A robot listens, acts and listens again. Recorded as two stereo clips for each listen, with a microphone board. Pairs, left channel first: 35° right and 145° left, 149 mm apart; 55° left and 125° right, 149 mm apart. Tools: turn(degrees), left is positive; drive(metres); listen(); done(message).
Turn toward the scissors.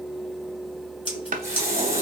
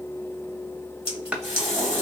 turn(degrees=10)
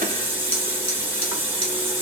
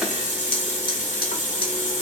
listen()
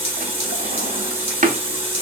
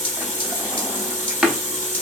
listen()
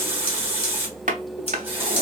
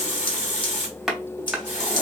done("Found it: scissors, straight ahead.")